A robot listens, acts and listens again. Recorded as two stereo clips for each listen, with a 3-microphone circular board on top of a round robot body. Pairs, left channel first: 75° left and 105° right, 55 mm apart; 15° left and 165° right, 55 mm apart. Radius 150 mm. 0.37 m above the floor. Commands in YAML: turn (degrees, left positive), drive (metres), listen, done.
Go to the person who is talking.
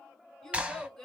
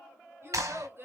turn: 155
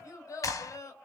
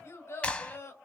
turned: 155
turn: 50
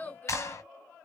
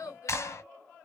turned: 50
turn: 10
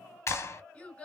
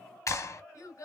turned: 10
drive: 1.0
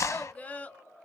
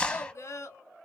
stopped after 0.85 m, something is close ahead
turn: 10
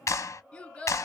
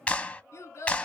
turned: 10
done: "I am next to the child speaking."